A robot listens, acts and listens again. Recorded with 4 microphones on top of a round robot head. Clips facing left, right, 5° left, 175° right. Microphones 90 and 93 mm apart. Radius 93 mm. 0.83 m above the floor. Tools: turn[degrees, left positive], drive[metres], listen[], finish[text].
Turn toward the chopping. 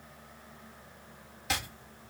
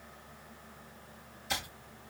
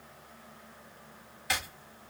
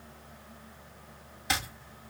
Thought: The chopping: 120° left.
Action: turn[120]
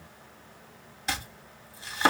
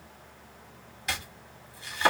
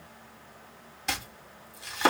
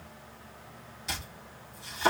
Thought: The chopping is now 30° left.
Action: turn[30]
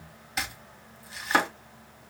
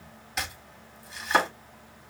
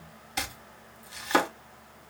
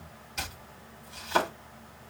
Action: finish[Found it: chopping, straight ahead.]